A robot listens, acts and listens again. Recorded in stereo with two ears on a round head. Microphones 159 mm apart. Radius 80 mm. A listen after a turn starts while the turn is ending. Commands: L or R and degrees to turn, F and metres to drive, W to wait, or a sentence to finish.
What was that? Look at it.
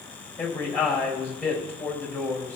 L30
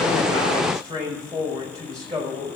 R20
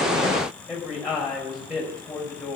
Facing the man speaking, over 4 m away.